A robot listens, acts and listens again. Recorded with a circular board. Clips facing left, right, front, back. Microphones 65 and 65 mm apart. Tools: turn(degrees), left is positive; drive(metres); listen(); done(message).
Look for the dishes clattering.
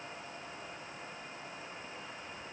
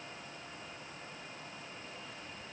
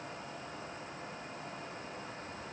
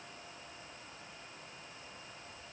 listen()
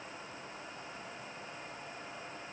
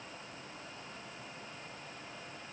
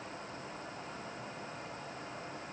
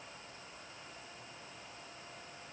listen()
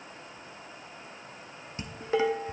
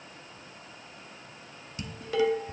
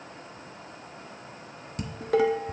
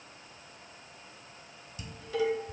turn(degrees=30)
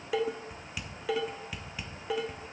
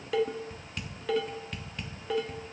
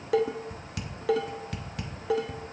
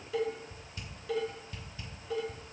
done("Facing the dishes clattering, under 1 m away.")